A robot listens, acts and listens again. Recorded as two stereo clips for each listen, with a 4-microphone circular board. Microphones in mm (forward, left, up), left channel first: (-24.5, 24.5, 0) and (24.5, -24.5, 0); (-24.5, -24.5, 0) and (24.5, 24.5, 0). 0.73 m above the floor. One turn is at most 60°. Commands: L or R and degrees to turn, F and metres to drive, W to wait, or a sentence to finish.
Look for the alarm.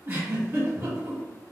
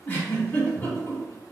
W
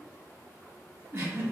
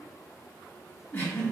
W
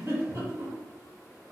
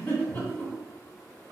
I can't make out an alarm, only a giggle.